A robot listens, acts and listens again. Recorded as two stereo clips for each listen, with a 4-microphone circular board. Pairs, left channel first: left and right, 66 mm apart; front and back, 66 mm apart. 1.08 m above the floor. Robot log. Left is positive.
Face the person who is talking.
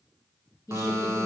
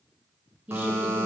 note: The woman speaking: 120° left.
cmd yaw +120
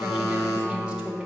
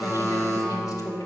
note: The woman speaking is now 15° right.
cmd yaw -15
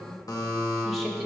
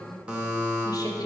end: Facing the woman speaking, under 1 m away.